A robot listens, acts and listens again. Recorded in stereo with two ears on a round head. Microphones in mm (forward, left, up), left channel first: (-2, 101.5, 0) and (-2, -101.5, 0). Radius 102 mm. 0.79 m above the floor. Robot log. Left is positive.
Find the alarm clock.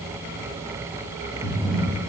cmd idle
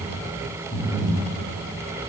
cmd idle
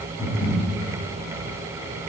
end: I can't make out an alarm clock to turn to.